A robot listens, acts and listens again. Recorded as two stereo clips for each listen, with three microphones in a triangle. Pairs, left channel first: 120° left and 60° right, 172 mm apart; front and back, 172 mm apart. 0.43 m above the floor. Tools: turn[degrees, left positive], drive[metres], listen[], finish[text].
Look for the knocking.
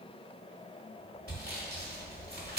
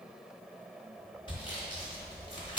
Action: listen[]
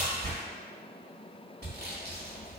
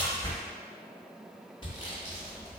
Action: listen[]
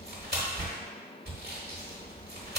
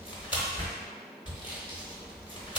Action: finish[I can't make out knocking, only sawing.]